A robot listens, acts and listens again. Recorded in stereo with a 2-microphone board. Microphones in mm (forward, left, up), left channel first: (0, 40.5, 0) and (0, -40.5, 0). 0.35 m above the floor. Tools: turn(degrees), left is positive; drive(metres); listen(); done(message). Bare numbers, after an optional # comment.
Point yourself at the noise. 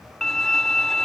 turn(30)
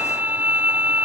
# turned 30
# So it is at 20° right.
turn(-20)
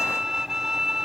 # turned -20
done("Facing the violin.")